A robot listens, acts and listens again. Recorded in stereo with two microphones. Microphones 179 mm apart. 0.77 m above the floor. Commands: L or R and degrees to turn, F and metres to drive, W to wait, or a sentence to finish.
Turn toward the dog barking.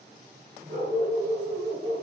R70
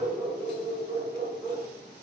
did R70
R10
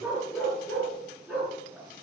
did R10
Found it: a dog barking, straight ahead.